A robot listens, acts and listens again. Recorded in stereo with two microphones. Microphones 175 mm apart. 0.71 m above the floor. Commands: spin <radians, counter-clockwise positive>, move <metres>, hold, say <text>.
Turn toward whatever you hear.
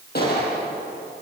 spin 1.13
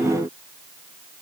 hold
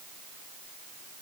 say I heard a gunshot, but can't make it out now. It was about straight ahead or 50° left.